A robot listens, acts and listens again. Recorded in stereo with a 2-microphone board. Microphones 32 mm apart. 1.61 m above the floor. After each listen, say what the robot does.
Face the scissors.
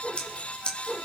Turn 35° left.
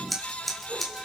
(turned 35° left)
Facing the scissors.